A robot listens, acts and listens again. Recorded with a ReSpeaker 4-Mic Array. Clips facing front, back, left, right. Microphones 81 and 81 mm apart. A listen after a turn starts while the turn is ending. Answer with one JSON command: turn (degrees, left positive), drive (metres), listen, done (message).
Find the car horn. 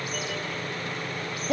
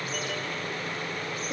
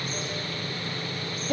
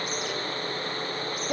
{"listen": true}
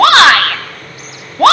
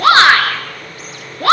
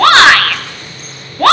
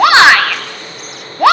{"listen": true}
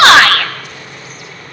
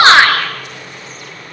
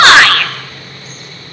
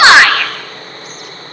{"done": "I can't make out a car horn to turn to."}